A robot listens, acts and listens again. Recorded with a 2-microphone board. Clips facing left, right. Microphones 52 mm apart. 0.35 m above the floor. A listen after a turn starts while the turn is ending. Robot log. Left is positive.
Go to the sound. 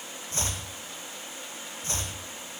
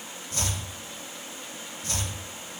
note: The chopping: about 30° left or 150° left.
cmd yaw +30
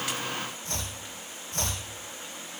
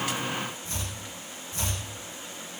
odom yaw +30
note: So it is at 120° left.
cmd yaw +120
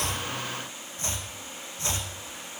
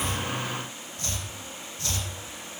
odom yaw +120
note: The chopping is now 30° left.
cmd yaw +30
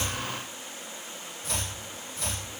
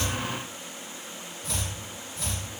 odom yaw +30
cmd fwd 1.0
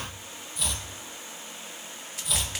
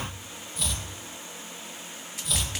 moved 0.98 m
cmd fwd 1.0
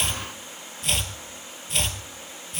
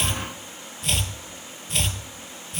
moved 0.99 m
cmd fwd 1.0
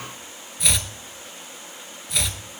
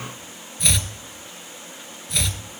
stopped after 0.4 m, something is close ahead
end: I am next to the chopping.